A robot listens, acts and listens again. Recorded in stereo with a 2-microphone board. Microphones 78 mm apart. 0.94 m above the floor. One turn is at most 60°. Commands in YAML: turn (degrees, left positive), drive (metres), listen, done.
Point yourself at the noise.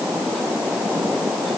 listen: true
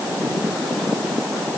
listen: true
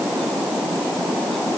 done: "I can't make out anything."